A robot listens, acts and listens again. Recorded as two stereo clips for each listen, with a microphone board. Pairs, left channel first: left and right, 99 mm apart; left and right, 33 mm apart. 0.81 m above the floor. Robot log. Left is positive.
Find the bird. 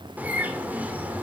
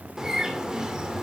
note: The bird: about 15° right or 165° right.
cmd yaw -15
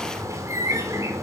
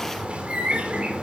note: So it is at 150° right.
cmd yaw -150
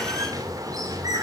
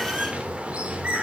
note: The bird is now 40° right.
cmd yaw -40
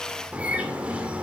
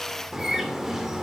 note: The bird is now 15° right.
cmd yaw -15
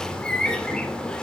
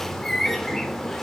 note: The bird is now 10° left.
cmd yaw +10
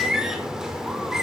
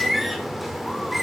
end: Found it: a bird, straight ahead, 2 to 4 m away.